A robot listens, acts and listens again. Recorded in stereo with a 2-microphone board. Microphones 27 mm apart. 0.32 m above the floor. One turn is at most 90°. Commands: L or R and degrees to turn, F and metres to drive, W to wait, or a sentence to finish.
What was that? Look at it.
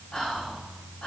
L40
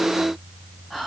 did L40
Facing the whispering, 1 to 2 m away.